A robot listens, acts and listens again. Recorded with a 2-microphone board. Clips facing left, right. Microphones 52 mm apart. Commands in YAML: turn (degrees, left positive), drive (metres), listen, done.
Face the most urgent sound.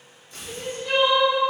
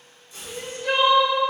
turn: -65
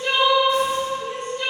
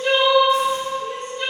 done: "Found it: crying, straight ahead, 1 to 2 m away."